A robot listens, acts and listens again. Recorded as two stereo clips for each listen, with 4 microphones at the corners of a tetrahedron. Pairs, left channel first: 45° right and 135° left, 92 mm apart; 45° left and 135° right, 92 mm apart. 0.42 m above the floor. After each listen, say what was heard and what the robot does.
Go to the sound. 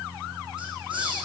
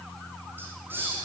The hiss: 160° left. Turn 160° left.
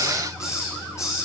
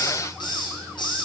The hiss is now 10° left. Turn 10° left.
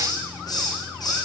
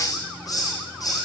Drive 1.0 m forward.
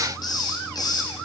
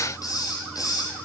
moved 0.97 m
Drive 1.0 m forward.
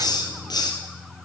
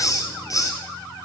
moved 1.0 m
Drive 1.0 m forward.
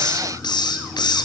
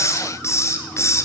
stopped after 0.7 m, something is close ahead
The hiss is now 10° right. Turn 10° right.
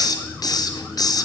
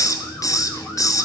I am next to the hiss.